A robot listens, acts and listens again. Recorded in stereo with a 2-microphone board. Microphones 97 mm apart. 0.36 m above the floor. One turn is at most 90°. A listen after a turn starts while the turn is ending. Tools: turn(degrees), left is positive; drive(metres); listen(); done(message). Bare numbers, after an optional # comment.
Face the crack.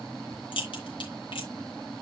# The crack: about 60° left or 120° left.
turn(60)
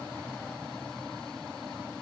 listen()
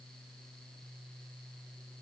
done("I heard a crack, but can't make it out now. It was about straight ahead or 60° left.")